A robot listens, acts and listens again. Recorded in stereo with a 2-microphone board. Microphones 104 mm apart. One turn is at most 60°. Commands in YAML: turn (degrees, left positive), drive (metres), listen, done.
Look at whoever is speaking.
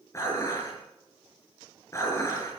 listen: true
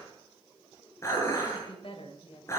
turn: 60
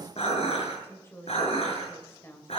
turn: 25
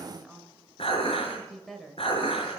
done: "Found it: a woman speaking, straight ahead, 2 to 4 m away."